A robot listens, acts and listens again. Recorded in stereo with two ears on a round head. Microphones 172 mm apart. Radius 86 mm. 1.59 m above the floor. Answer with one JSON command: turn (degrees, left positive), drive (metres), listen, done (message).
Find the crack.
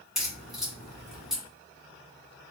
{"turn": 30}
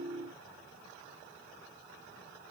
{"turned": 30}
{"listen": true}
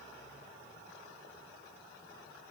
{"done": "I heard a crack, but can't make it out now. It was about 30° right or 150° left."}